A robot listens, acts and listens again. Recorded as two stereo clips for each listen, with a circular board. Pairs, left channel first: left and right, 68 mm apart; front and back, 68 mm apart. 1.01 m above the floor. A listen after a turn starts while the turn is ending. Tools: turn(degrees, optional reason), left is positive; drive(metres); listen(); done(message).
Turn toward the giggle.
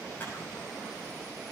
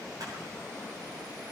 listen()
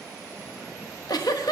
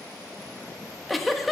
turn(degrees=90, reason="The giggle: 90° left.")
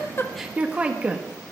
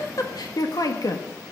turn(degrees=-20, reason="The giggle is now 20° right.")
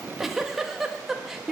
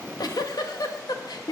done("Facing the giggle.")